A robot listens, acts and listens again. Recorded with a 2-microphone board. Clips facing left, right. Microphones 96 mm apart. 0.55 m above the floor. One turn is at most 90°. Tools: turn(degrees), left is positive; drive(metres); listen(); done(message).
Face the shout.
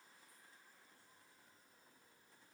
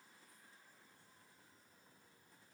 listen()
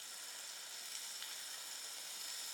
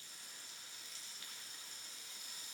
listen()
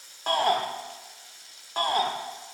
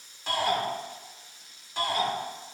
turn(degrees=50)
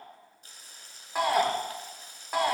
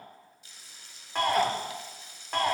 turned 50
turn(degrees=10)
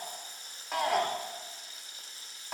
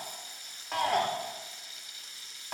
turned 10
done("Found it: a shout, straight ahead, 1 to 2 m away.")